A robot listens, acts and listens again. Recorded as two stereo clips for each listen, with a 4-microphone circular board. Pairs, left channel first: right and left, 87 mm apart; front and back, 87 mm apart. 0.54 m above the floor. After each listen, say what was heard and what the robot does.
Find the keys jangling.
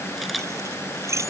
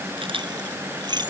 The keys jangling: 145° left. Turn 145° left.
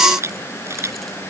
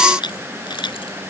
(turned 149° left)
Keep listening.
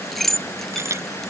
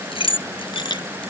Found it: keys jangling, straight ahead.